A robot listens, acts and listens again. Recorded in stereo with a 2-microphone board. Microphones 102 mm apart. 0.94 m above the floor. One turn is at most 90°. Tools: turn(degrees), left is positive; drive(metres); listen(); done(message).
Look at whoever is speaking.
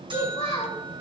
turn(degrees=90)
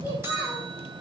turn(degrees=-20)
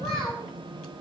done("Found it: a child speaking, straight ahead.")